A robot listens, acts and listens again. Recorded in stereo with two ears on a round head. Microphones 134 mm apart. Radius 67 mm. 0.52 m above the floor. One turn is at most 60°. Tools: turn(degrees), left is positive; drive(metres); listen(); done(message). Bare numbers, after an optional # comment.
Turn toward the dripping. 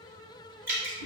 # The dripping: about 15° right or 165° right.
turn(-15)
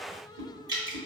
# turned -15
# So it is at 155° right.
turn(-60)
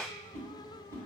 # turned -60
# Nothing new. It was at 95° right.
turn(-60)
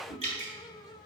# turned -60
# The dripping is now 50° right.
turn(-50)
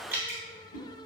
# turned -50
# The dripping is now 15° right.
turn(-15)
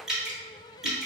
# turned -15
done("Facing the dripping, 1 to 2 m away.")